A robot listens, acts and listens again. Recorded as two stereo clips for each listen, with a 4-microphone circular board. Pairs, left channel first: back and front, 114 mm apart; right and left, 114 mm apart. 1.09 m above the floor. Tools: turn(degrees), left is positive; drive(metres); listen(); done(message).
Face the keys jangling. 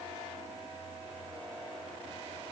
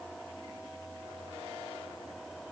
listen()
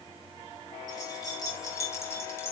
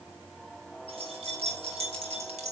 turn(degrees=110)
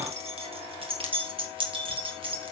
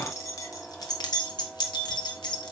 turn(degrees=-40)
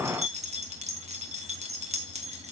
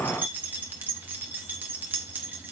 turn(degrees=15)
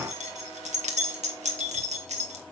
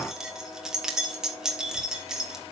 done("Found it: keys jangling, straight ahead.")